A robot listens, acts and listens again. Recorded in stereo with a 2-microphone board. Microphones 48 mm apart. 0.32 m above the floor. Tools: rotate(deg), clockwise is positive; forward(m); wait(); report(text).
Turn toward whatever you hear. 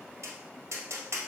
rotate(90)
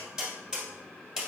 rotate(15)
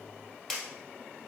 report("Facing the tapping.")